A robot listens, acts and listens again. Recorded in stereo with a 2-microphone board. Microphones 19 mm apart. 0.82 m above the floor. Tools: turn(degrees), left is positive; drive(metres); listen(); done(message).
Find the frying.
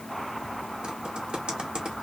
listen()
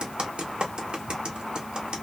listen()
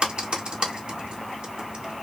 done("I can't make out frying to turn to.")